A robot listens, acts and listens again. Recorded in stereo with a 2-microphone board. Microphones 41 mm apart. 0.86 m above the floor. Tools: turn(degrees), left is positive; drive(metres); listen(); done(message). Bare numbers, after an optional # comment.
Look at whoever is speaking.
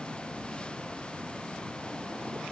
listen()
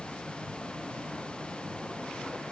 listen()
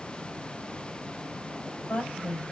# The woman speaking: about 60° left or 120° left.
turn(60)
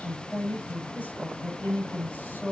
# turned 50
# So it is at 70° left.
turn(70)
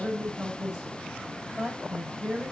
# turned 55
# The woman speaking is now 15° left.
turn(15)
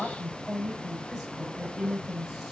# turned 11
done("Facing the woman speaking.")